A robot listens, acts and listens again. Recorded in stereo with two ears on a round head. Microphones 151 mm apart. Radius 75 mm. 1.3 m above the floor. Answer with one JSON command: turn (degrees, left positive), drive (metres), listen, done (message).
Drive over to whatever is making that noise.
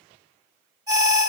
{"turn": -25}
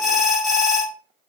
{"drive": 1.0}
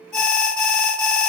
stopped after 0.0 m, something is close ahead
{"done": "Something is in my way. I am facing the alarm but have not reached it."}